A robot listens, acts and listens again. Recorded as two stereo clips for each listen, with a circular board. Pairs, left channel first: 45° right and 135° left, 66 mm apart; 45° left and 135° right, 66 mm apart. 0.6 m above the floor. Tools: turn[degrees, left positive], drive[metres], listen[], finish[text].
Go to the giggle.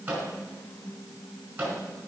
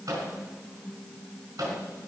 Action: listen[]
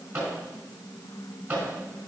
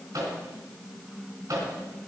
Action: listen[]
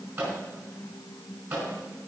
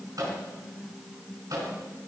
Action: finish[I can't make out a giggle, only a microwave.]